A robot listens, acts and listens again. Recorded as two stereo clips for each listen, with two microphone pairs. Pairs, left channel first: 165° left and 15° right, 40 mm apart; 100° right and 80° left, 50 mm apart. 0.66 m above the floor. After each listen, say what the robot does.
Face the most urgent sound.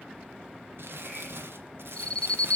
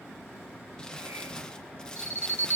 Turn 125° right.
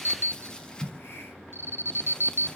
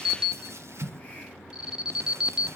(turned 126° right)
Found it: an alarm, straight ahead.